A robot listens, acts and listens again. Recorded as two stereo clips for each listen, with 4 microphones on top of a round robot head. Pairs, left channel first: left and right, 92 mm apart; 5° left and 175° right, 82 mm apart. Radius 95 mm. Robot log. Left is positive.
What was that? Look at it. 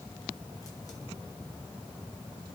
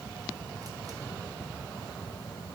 cmd idle
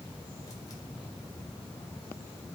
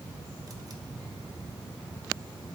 cmd idle
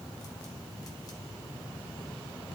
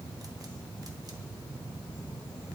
end: I can't make out anything to turn to.